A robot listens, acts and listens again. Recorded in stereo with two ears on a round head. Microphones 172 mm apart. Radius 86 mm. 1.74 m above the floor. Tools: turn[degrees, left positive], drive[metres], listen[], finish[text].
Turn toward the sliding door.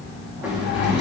Action: turn[-30]
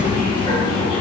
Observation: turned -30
Thought: So it is at 25° left.
Action: turn[25]
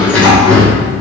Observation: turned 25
Action: finish[Found it: a sliding door, straight ahead, 2 to 4 m away.]